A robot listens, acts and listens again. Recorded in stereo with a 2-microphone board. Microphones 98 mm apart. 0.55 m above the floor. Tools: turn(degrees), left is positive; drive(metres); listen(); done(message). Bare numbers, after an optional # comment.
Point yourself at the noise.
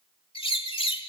# The bird: about 65° left or 115° left.
turn(65)
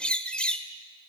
# So it is at 10° left.
turn(10)
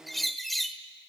done("Facing the bird, 1 to 2 m away.")